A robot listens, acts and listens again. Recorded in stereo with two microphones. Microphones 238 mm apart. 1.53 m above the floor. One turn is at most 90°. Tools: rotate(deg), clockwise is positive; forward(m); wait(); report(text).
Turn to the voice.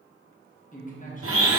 rotate(-35)
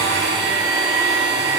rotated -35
wait()
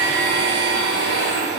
wait()
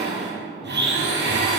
report("I heard a man speaking, but can't make it out now. It was about straight ahead or 110° left.")